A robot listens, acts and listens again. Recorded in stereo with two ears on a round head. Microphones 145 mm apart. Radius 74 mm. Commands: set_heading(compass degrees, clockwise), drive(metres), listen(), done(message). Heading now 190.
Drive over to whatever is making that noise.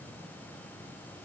listen()
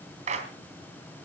set_heading(235)
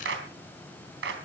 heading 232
set_heading(322)
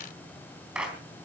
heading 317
drive(1.0)
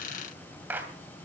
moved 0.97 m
set_heading(327)
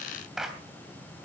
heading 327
drive(1.0)
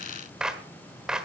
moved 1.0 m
drive(1.0)
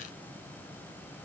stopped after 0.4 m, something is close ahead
listen()
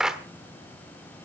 done("Arrived at the clap, straight ahead.")